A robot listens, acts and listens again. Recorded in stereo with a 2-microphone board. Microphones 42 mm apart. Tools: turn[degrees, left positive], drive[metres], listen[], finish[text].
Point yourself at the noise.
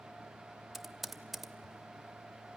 Action: turn[30]
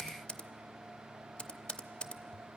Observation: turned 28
Thought: So it is at 155° left.
Action: turn[155]
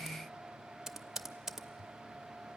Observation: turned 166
Thought: The typing on a keyboard is now 10° right.
Action: turn[-10]
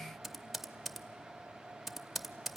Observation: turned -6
Action: finish[Found it: typing on a keyboard, straight ahead, under 1 m away.]